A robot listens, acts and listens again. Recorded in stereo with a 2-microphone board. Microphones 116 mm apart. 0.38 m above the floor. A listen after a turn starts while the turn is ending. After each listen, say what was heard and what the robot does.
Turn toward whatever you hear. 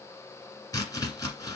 The chopping: about 30° left or 150° left. Turn 30° left.
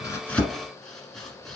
Found it: chopping, straight ahead.